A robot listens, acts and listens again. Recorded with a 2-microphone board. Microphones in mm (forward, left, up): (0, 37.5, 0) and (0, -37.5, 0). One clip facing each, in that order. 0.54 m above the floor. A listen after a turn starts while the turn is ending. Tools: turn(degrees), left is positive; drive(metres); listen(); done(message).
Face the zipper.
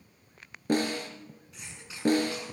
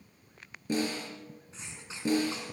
listen()
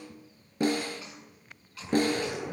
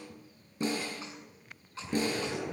turn(degrees=30)
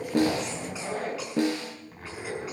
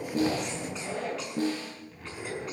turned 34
turn(degrees=135)
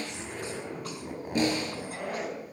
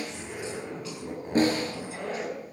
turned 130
done("Facing the zipper.")